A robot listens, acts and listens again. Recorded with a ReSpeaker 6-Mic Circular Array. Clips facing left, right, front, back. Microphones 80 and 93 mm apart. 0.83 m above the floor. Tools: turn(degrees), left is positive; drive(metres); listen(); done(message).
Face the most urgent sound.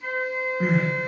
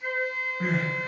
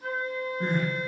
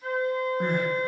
turn(degrees=170)
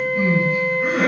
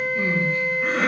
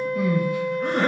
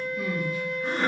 turn(degrees=10)
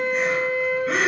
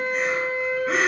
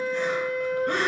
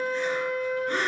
done("Facing the crying.")